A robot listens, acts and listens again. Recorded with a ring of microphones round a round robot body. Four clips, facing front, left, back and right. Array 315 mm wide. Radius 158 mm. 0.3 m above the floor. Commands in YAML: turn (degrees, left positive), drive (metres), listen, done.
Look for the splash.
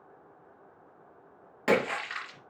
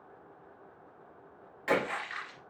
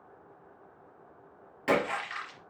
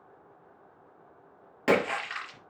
turn: -65
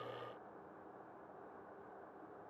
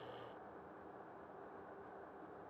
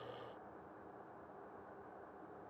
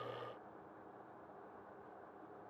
done: "Facing where the splash came from. I can't hear it now."